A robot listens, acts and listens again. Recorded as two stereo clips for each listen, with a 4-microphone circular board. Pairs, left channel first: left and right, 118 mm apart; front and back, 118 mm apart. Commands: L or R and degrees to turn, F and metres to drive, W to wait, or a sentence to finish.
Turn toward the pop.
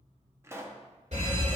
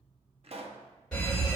R155
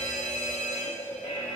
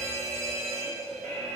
I heard a pop from this way, but can't make it out now.